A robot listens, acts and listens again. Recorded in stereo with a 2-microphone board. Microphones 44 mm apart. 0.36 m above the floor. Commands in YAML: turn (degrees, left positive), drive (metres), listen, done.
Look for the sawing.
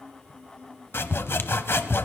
turn: 60
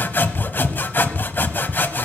turn: 55
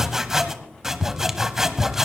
turn: -10
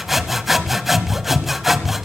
done: "Facing the sawing."